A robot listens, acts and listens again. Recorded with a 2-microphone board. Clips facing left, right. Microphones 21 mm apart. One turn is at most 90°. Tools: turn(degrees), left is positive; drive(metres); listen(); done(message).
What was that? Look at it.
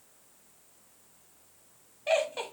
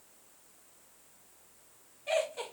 turn(degrees=40)
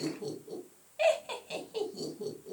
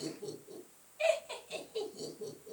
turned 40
turn(degrees=90)
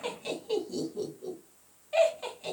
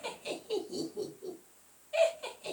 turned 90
turn(degrees=45)
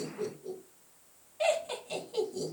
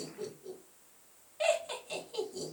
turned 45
done("Found it: laughter, straight ahead, 2 to 4 m away.")